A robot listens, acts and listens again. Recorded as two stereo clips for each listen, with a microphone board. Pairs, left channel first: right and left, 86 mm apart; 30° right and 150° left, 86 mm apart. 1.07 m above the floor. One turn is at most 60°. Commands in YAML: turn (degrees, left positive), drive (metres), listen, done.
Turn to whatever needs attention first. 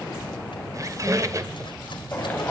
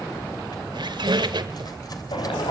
turn: -20
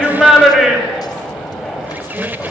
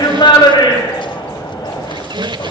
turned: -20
done: "Facing the shout, over 4 m away."